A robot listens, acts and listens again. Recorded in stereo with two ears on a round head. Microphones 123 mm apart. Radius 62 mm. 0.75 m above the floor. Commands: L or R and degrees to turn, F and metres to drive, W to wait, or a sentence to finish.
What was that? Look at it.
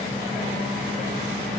W
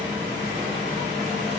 W
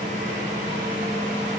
I can't make out anything to turn to.